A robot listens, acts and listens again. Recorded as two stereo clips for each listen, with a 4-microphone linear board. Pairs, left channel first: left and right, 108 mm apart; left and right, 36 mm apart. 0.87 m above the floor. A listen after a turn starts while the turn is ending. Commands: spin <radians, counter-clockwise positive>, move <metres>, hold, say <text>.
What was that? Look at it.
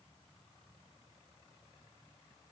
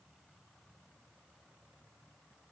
hold
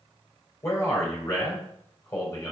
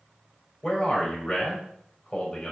spin 0.44
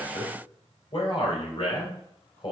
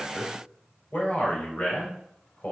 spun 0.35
spin 2.27
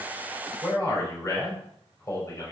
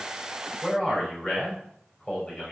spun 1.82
spin 0.52
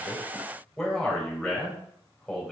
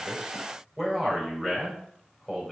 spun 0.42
say Found it: a man speaking, straight ahead, 2 to 4 m away.